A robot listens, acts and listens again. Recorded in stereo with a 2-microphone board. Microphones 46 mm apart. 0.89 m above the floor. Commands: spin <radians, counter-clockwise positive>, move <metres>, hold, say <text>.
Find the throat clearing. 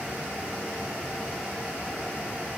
hold
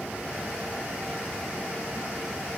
hold
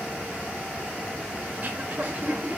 spin -0.70
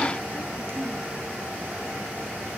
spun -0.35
spin -2.09
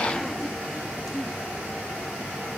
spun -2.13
hold
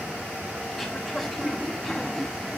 say Found it: throat clearing, straight ahead.